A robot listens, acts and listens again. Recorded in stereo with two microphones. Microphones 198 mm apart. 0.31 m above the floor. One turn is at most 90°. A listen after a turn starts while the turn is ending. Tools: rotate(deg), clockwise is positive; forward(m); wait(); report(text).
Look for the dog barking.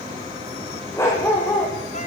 rotate(-30)
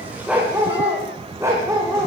rotate(15)
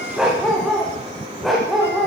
report("Found it: a dog barking, straight ahead, over 4 m away.")